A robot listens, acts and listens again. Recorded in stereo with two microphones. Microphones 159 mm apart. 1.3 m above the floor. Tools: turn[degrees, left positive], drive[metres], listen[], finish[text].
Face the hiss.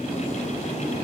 Action: listen[]
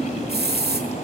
Thought: The hiss: about 75° right or 105° right.
Action: turn[-75]
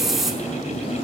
Action: finish[Facing the hiss.]